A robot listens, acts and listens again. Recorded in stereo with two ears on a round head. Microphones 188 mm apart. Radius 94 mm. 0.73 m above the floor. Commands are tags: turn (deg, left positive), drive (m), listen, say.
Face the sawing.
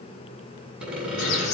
<turn deg="-30"/>
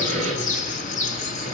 <turn deg="-145"/>
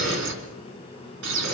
<listen/>
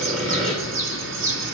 <say>Facing the sawing.</say>